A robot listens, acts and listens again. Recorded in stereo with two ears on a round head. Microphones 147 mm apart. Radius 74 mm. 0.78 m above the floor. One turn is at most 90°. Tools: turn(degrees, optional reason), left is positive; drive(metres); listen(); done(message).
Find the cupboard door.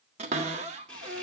turn(degrees=-40, reason="The cupboard door: about 40° right or 140° right.")
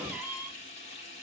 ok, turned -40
turn(degrees=-10, reason="So it is at 10° right.")
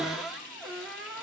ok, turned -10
done("Found it: a cupboard door, straight ahead.")